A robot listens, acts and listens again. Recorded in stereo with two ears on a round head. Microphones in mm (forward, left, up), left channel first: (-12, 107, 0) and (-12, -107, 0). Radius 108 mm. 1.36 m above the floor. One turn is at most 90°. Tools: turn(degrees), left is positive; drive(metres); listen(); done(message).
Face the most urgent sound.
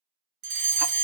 turn(degrees=-45)
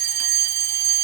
turn(degrees=-80)
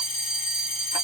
turn(degrees=25)
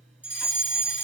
done("Found it: a fire alarm, straight ahead, 1 to 2 m away.")